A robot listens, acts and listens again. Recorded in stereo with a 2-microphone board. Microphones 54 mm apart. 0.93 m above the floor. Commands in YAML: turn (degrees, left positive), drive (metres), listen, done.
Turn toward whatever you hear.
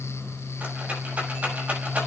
turn: -25
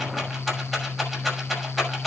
done: "Found it: a rattle, straight ahead."